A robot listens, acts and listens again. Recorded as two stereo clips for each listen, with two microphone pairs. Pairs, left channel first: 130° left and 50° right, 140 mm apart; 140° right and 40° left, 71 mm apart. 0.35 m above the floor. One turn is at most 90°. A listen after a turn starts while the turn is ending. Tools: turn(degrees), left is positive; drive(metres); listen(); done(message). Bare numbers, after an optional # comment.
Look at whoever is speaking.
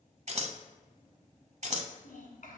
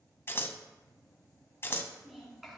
# The child speaking: 125° left.
turn(90)
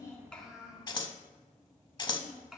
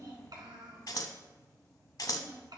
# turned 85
# The child speaking is now 40° left.
turn(40)
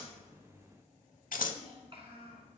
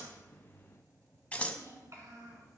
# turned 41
done("Facing the child speaking.")